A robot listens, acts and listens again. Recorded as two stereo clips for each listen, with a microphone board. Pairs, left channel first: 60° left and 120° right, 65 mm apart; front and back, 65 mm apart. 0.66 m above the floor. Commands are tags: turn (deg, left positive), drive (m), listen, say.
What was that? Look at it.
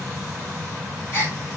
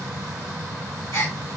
<turn deg="20"/>
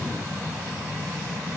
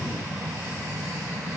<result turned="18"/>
<say>Facing where the gasp came from. I can't hear it now.</say>